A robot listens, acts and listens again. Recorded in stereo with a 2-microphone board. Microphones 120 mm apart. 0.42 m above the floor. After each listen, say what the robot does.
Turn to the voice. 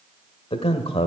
Turn 55° left.
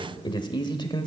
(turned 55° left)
Turn 50° left.
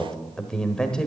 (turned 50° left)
Facing the man speaking.